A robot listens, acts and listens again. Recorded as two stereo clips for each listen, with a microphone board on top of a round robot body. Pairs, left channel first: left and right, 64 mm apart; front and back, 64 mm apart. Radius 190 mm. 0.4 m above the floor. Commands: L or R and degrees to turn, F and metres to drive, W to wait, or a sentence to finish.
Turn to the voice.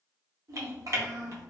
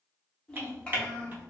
R75
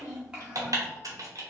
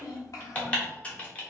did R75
R15
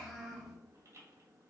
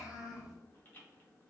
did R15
Found it: a child speaking, straight ahead, 1 to 2 m away.